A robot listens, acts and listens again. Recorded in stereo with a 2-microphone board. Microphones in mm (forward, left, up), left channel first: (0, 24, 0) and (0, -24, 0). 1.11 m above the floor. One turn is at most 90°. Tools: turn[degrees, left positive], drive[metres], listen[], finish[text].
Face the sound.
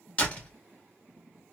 Thought: The door slam: about 25° left or 155° left.
Action: turn[25]
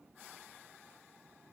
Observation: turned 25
Action: listen[]
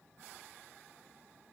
Action: finish[I heard a door slam, but can't make it out now. It was about straight ahead or 130° left.]